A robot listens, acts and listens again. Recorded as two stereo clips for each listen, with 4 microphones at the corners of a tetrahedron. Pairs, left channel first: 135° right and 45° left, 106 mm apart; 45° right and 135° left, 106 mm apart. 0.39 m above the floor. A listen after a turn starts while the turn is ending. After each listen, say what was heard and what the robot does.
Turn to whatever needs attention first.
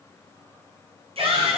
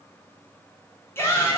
The shout: 20° left. Turn 20° left.
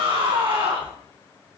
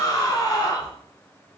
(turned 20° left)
The shout is now 10° left. Turn 10° left.
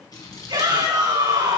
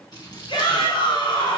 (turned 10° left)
Found it: a shout, straight ahead.